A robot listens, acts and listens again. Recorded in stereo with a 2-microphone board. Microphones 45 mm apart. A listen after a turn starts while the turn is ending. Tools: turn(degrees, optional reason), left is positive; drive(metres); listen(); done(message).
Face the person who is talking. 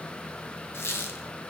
listen()
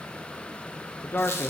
turn(degrees=50, reason="The man speaking: about 50° left or 130° left.")
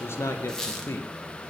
turn(degrees=75, reason="So it is at 75° left.")
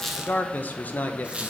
turn(degrees=40, reason="The man speaking is now 40° left.")
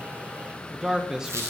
turn(degrees=-15, reason="The man speaking is now 15° right.")
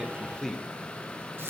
done("Facing the man speaking, under 1 m away.")